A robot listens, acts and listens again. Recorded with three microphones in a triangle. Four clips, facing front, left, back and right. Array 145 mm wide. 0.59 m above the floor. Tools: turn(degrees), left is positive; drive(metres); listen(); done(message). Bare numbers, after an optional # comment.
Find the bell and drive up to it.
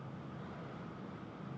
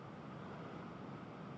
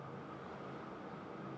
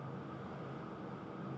listen()
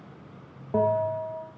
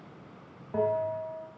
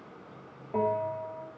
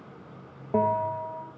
# The bell: 75° right.
turn(-75)
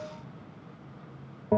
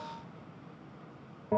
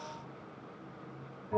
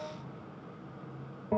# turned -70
drive(1.0)
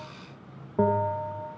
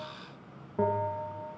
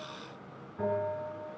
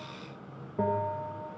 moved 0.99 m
drive(1.0)
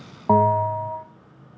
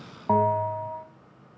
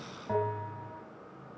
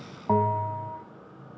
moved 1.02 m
drive(1.0)
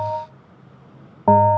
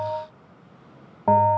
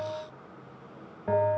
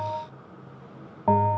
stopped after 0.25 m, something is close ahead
done("Arrived at the bell, straight ahead.")